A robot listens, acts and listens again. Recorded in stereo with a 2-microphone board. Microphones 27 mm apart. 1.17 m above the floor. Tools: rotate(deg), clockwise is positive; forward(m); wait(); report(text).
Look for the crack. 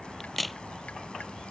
rotate(-30)
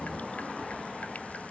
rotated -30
wait()
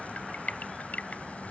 report("I heard a crack, but can't make it out now. It was about 30° right or 150° left.")